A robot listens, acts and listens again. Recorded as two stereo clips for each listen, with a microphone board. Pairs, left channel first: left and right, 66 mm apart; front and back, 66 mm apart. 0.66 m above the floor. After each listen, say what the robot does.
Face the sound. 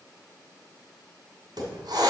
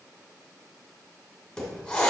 Turn 75° right.
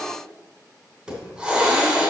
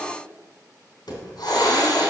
Turn 10° right.
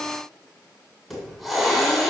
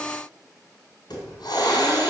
Found it: a hiss, straight ahead.